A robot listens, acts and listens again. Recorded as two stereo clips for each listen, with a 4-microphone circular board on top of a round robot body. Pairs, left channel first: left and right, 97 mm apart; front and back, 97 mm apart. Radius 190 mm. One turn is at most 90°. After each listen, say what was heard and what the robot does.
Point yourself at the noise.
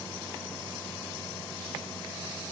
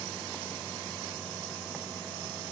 Keep listening.
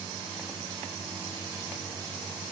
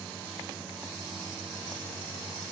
Keep listening.
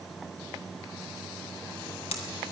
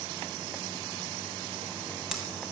The hammering: 95° left. Turn 90° left.
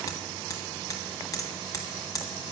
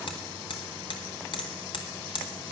The hammering is now 35° left. Turn 35° left.
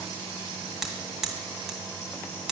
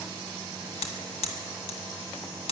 Facing the hammering.